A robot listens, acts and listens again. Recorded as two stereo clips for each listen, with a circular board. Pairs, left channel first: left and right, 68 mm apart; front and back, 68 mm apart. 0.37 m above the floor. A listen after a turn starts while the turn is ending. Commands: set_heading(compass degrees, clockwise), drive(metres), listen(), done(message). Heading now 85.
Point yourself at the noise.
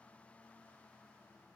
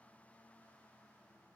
listen()
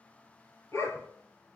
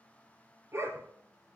set_heading(310)
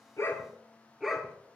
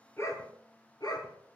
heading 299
done("Facing the dog barking, 2 to 4 m away.")